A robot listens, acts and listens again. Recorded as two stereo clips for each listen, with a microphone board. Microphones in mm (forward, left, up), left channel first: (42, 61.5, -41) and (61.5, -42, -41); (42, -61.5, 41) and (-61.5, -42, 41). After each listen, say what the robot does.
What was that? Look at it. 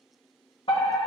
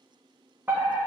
Turn 100° left.
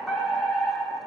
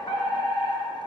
Found it: a fire alarm, straight ahead.